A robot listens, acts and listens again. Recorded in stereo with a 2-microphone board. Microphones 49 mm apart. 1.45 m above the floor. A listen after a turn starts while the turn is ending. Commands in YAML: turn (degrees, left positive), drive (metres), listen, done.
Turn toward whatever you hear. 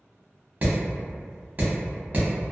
turn: -40
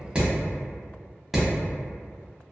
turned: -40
done: "Found it: hammering, straight ahead."